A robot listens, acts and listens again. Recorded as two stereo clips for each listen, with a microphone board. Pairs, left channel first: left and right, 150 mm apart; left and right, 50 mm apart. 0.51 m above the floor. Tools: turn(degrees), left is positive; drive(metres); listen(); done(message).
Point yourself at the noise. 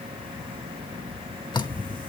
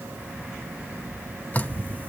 turn(degrees=30)
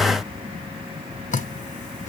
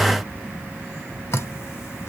turn(degrees=115)
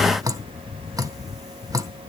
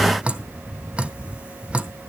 turn(degrees=-25)
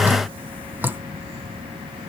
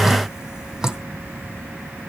turn(degrees=-15)
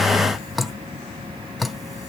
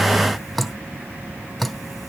done("Found it: dripping, straight ahead.")